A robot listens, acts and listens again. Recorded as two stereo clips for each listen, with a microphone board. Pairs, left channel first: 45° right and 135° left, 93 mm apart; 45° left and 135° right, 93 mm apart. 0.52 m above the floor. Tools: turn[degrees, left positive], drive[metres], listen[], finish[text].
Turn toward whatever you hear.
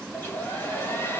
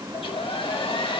Thought: The hair dryer: 20° left.
Action: turn[20]
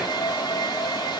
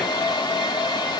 Action: finish[Facing the hair dryer.]